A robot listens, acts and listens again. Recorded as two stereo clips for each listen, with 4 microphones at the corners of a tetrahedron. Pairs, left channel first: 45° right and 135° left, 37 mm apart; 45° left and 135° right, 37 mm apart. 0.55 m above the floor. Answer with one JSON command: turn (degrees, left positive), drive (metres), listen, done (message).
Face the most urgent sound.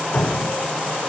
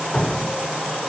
{"listen": true}
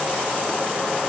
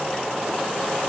{"listen": true}
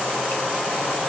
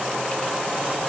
{"done": "I can't make out anything urgent, only dripping."}